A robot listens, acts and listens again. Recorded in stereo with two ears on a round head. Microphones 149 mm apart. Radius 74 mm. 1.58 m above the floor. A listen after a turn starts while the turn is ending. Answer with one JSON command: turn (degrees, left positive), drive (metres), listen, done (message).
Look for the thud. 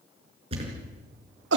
{"turn": -35}
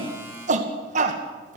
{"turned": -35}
{"listen": true}
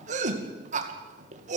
{"done": "I heard a thud, but can't make it out now. It was about straight ahead or 110° right."}